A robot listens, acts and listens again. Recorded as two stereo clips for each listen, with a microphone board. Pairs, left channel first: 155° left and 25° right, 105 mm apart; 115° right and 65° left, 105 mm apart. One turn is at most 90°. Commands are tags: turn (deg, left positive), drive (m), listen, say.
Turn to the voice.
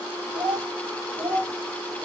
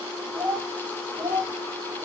<turn deg="20"/>
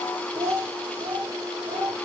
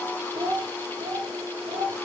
<turn deg="35"/>
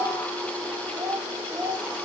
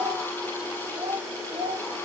<turn deg="40"/>
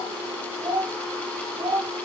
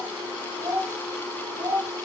<turn deg="10"/>
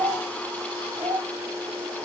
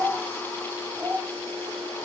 <say>Found it: a child speaking, straight ahead.</say>